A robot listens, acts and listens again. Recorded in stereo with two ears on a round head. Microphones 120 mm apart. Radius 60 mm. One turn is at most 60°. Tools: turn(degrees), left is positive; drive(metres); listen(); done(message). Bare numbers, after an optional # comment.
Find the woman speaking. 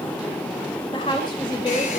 # The woman speaking: about 35° left or 145° left.
turn(35)
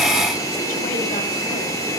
listen()
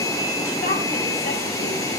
listen()
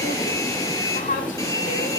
# So it is at 120° left.
turn(60)
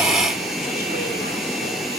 # Nothing new. It was at 60° left.
turn(60)
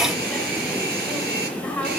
# The woman speaking is now 10° left.
turn(10)
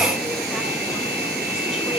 listen()
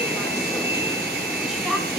listen()
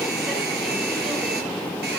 done("Facing where the woman speaking came from. I can't hear it now.")